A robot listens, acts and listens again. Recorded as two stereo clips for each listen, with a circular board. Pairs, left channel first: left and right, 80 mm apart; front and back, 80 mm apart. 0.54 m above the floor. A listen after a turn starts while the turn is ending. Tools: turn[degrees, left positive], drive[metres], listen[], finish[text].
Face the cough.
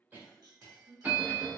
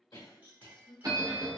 Thought: The cough: 25° right.
Action: turn[-25]
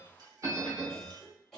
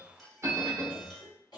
Action: finish[Facing the cough, 1 to 2 m away.]